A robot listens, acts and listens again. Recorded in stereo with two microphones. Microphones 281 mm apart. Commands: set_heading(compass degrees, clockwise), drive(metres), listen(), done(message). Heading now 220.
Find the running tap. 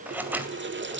set_heading(260)
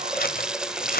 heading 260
done("Facing the running tap.")